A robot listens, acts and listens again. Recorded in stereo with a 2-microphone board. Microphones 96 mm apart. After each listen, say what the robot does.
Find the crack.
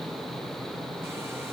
Keep listening.
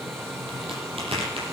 Turn 75° right.
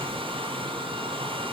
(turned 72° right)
Keep listening.
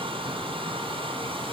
I heard a crack, but can't make it out now. It was about straight ahead or 35° right.